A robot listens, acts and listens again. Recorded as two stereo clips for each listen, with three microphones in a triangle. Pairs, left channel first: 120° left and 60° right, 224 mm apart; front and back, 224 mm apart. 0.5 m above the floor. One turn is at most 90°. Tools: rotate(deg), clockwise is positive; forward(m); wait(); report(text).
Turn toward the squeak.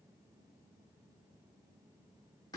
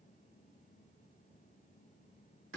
wait()
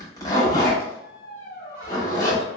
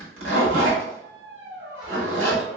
rotate(-90)
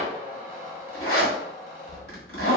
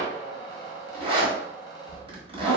rotate(-75)
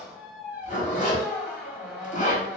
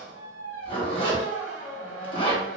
rotate(-25)
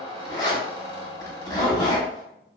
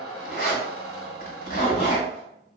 report("Found it: a squeak, straight ahead, 1 to 2 m away.")